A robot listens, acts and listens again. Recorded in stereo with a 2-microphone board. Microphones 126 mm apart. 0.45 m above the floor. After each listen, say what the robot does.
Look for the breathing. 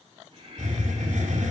Turn 45° right.
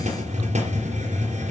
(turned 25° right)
Keep listening.
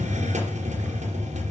Keep listening.
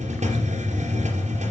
I heard breathing, but can't make it out now. It was about 20° right or 110° right.